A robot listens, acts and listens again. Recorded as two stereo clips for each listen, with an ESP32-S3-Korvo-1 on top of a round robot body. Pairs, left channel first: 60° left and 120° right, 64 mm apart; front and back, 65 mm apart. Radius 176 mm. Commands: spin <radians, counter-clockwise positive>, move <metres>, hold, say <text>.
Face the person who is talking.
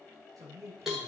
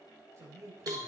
spin -2.44
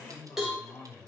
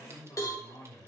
spin 0.52
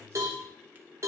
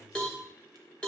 hold
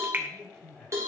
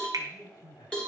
spin -0.17
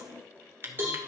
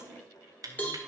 hold
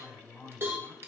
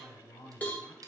say Found it: a man speaking, straight ahead.